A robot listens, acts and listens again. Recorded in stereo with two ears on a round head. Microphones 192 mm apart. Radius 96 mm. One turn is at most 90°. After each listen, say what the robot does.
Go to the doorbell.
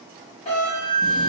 Turn 30° left.
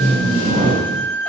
Keep listening.
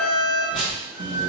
Keep listening.
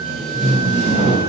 I heard a doorbell, but can't make it out now. It was about straight ahead or 120° left. I did not reach it.